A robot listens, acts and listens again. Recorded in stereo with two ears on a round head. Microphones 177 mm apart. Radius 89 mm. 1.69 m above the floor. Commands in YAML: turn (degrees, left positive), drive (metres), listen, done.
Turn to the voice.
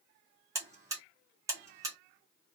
listen: true
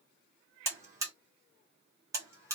listen: true
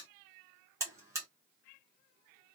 done: "I can't make out anyone speaking, only a buzzer."